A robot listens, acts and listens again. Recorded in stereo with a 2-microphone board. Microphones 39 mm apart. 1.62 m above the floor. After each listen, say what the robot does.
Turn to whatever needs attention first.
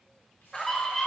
Turn 30° left.
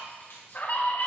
Turn 135° left.
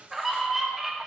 Turn 10° right.
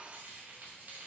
Keep listening.
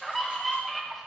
Facing the scream.